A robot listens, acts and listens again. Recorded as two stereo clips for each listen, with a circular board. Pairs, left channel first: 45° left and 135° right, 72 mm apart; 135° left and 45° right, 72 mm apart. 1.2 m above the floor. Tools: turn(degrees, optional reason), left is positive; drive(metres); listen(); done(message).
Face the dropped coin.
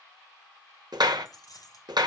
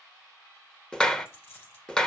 turn(degrees=75, reason="The dropped coin: 75° left.")
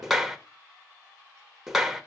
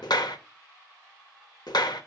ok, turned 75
done("Facing where the dropped coin came from. I can't hear it now.")